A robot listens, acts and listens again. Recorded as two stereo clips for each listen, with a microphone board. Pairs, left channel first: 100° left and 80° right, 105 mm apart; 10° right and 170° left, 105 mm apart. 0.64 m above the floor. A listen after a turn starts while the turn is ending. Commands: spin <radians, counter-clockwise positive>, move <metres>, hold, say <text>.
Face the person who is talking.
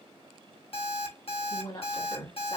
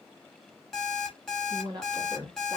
spin 2.36
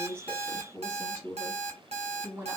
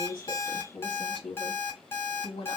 spin -0.35
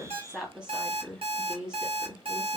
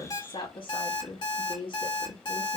say Facing the woman speaking, 1 to 2 m away.